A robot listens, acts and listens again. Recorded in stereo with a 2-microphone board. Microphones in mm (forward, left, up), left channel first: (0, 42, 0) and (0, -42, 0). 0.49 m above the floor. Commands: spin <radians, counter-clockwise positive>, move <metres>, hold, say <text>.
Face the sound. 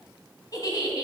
spin 0.79
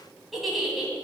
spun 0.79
say Facing the giggle, 2 to 4 m away.